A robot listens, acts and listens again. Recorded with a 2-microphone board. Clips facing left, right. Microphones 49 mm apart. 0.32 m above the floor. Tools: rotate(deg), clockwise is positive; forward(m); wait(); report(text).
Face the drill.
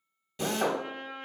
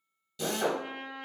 rotate(-30)
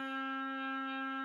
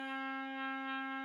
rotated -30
wait()
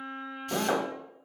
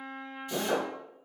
rotate(-110)
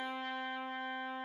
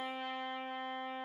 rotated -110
wait()
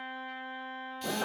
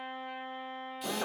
report("Facing the drill, under 1 m away.")